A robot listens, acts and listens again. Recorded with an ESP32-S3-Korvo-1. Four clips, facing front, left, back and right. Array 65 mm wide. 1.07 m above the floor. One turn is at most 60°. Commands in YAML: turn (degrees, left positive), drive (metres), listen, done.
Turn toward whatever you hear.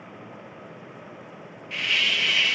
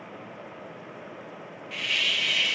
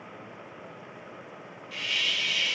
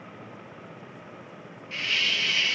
turn: -10
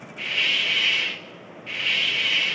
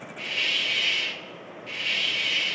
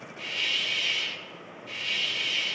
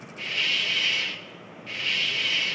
done: "Found it: a hiss, straight ahead, 1 to 2 m away."